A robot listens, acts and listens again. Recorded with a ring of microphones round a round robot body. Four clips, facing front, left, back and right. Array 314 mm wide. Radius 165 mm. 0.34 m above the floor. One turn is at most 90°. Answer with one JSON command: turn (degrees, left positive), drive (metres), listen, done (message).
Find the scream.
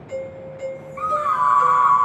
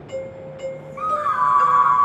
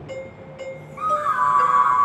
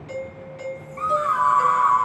{"turn": -50}
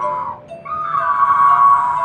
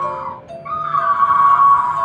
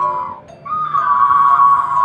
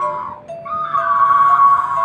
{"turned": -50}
{"turn": -10}
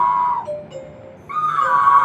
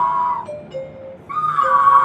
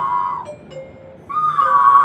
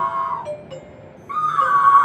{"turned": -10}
{"done": "Found it: a scream, straight ahead, 2 to 4 m away."}